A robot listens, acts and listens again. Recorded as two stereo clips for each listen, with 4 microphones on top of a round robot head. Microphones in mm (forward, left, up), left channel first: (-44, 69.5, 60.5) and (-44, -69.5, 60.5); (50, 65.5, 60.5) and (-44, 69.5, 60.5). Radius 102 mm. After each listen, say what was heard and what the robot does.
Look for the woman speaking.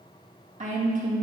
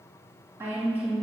The woman speaking: 115° right. Turn 115° right.
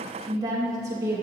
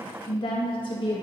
The woman speaking is now 20° right. Turn 20° right.
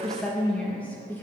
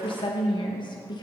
The woman speaking is now 15° left. Turn 15° left.
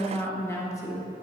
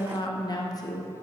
The woman speaking is now 35° left. Turn 35° left.
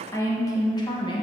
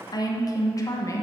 The woman speaking is now 45° left. Turn 45° left.
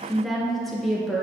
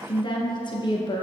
Found it: a woman speaking, straight ahead.